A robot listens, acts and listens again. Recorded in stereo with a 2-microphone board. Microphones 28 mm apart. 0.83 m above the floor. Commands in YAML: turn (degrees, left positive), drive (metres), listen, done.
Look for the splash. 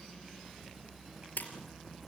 turn: 90
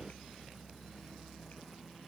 done: "Facing where the splash came from. I can't hear it now."